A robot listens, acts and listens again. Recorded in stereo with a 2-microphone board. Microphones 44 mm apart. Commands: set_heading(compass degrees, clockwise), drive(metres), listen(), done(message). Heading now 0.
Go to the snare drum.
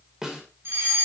set_heading(30)
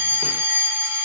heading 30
listen()
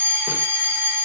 listen()
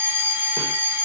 done("I heard a snare drum, but can't make it out now. It was about 15° left or 135° right. I did not reach it.")